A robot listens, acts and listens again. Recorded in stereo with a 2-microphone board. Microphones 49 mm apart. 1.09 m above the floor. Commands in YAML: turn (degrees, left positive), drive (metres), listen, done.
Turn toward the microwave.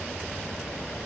listen: true
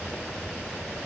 listen: true
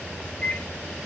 turn: 25
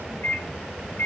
turn: 130
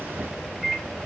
done: "Found it: a microwave, straight ahead, 1 to 2 m away."